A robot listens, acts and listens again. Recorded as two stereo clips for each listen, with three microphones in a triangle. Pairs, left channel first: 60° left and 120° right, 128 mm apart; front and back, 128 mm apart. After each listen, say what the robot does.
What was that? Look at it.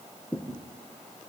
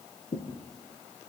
Turn 20° right.
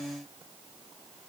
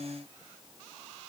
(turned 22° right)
I heard a thud from this way, but can't make it out now.